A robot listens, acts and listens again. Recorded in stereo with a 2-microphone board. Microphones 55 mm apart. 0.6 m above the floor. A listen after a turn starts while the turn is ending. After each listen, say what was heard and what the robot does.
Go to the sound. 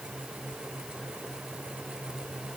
Keep listening.
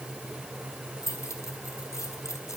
The keys jangling: about 70° left or 110° left. Turn 70° left.
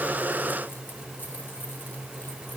Keep listening.
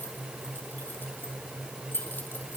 So it is at 40° left. Turn 40° left.
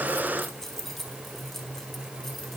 Drive 1.0 m forward.
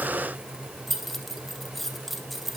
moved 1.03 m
Drive 1.0 m forward.
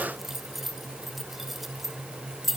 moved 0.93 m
Drive 1.0 m forward.
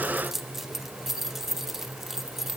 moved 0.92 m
Drive 1.0 m forward.
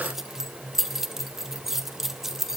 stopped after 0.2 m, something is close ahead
The keys jangling is now 10° right. Turn 10° right.
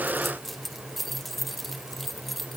I am next to the keys jangling.